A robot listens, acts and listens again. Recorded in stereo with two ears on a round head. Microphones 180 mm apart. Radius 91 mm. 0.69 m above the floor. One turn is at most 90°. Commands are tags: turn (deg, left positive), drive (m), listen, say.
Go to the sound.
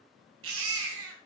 <turn deg="-90"/>
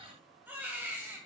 <turn deg="-10"/>
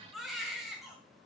<drive m="1.0"/>
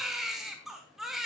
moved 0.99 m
<drive m="1.0"/>
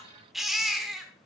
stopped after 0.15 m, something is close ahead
<say>Arrived at the baby crying, straight ahead.</say>